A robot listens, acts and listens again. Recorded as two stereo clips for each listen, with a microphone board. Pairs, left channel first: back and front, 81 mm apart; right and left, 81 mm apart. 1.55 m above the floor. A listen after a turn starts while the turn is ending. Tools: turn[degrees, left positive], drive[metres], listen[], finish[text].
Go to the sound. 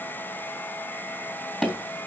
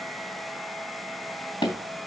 Thought: The tapping: 90° right.
Action: turn[-90]
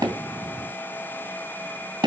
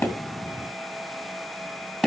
Action: drive[1.0]
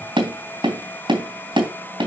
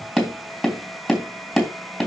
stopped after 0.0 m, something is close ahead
Action: finish[Blocked. The tapping is further on, straight ahead.]